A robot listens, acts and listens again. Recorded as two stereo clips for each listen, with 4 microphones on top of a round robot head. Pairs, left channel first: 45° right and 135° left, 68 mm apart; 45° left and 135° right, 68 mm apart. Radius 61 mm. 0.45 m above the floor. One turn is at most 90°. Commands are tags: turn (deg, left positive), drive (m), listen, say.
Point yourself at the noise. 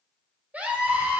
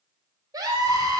<turn deg="-90"/>
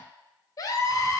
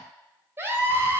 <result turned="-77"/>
<turn deg="-80"/>
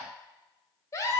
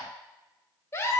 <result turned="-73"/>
<say>Facing the scream.</say>